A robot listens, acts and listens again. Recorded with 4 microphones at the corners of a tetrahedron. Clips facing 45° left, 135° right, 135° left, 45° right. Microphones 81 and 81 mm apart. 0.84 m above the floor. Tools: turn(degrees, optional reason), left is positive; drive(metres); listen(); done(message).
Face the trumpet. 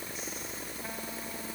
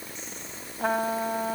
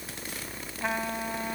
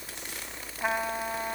turn(degrees=-120, reason="The trumpet: 120° right.")
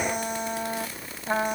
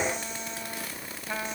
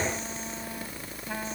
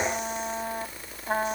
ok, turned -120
done("Facing the trumpet.")